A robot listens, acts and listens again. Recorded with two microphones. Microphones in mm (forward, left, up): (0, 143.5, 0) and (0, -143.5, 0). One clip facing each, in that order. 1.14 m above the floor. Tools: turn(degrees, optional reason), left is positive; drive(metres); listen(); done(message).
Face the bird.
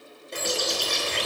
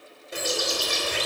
turn(degrees=-30)
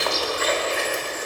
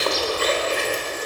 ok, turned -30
turn(degrees=-140, reason="So it is at 140° right.")
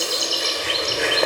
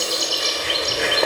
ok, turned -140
done("Facing the bird, 2 to 4 m away.")